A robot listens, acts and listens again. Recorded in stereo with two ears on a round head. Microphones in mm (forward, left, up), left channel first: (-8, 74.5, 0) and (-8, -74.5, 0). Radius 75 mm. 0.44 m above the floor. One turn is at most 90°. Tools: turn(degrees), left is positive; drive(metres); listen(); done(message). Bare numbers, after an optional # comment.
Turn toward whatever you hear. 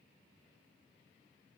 listen()
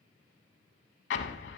turn(90)
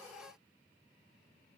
done("I heard an explosion from this way, but can't make it out now.")